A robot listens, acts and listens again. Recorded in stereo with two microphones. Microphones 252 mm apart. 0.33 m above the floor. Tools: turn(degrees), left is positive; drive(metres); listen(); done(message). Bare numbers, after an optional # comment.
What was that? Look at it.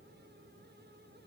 listen()
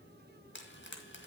# The frying: about 50° left or 130° left.
turn(50)
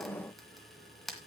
done("Found it: frying, straight ahead, 2 to 4 m away.")